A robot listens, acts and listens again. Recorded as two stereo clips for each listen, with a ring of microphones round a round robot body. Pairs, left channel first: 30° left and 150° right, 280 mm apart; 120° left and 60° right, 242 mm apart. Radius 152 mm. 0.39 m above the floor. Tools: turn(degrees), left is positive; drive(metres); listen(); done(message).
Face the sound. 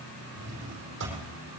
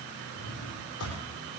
turn(degrees=160)
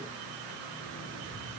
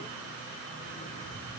listen()
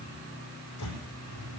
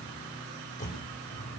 turn(degrees=60)
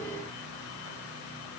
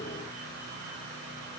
listen()
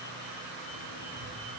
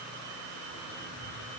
listen()
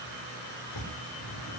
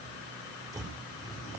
turn(degrees=15)
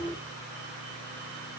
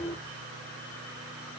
listen()
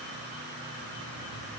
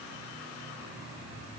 listen()
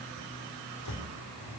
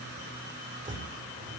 done("Facing the drawer, over 4 m away.")